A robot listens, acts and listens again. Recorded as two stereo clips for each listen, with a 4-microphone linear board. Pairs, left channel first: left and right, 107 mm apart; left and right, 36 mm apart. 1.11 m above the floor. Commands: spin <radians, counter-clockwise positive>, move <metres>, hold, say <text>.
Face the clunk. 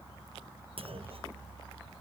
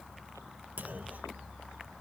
spin -1.13
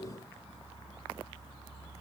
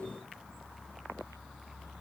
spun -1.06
hold
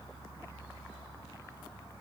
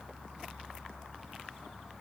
say I heard a clunk, but can't make it out now. It was about 5° right or 55° right.